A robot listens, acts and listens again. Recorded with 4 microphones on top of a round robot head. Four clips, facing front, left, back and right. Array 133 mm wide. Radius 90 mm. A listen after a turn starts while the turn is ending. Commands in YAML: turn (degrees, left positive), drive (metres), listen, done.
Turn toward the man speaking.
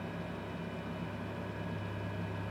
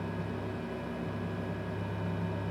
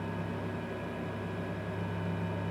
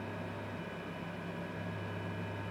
listen: true
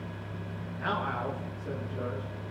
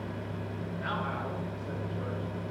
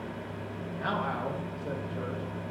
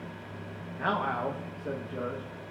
turn: -105
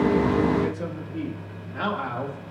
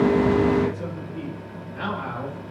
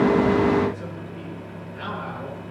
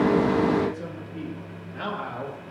done: "Facing the man speaking."